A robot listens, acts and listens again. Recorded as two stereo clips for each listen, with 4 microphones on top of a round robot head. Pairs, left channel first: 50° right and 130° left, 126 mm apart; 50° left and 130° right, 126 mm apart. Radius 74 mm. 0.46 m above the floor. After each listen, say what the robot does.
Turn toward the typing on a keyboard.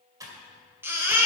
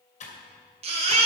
Turn 65° left.
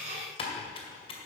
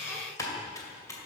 Turn 10° right.
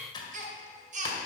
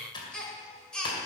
Facing the typing on a keyboard.